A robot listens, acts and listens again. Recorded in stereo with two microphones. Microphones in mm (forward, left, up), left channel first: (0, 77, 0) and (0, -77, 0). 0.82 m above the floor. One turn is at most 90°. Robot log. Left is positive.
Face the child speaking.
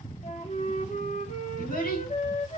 note: The child speaking: about 70° left or 110° left.
cmd yaw +70
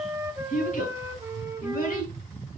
note: So it is at 60° left.
cmd yaw +60
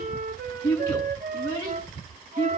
note: The child speaking is now 10° left.
cmd yaw +10
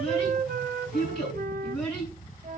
end: Facing the child speaking, over 4 m away.